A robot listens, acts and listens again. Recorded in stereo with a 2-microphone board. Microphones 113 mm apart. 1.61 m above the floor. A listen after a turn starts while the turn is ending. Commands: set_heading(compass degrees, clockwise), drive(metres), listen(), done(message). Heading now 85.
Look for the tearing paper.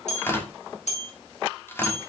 set_heading(65)
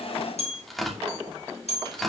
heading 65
done("Facing the tearing paper.")